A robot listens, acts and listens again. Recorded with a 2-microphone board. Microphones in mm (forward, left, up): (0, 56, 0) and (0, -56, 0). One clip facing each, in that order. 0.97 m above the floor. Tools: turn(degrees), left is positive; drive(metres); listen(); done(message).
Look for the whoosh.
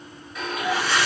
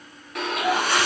turn(degrees=-50)
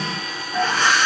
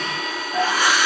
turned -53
turn(degrees=-10)
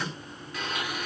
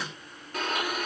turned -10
listen()
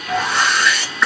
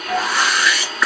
done("Found it: a whoosh, straight ahead.")